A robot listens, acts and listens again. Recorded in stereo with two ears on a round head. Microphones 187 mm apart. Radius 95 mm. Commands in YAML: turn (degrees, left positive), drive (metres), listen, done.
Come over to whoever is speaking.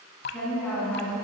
turn: 30
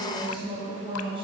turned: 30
turn: -25
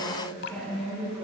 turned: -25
drive: 1.0
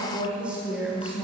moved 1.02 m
drive: 1.0
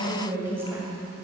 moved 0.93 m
turn: -15
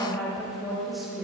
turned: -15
drive: 1.0
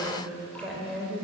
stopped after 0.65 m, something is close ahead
done: "I am next to the woman speaking."